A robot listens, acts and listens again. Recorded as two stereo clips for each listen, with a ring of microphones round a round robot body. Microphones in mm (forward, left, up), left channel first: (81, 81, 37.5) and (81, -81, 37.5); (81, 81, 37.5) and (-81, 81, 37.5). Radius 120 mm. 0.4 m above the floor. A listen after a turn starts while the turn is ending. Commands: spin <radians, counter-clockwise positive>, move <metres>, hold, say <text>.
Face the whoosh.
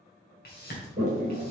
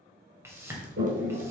spin 1.83
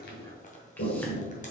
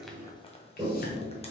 hold
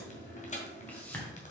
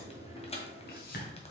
spin 0.17
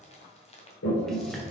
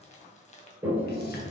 hold
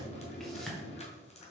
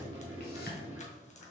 say Facing the whoosh, 2 to 4 m away.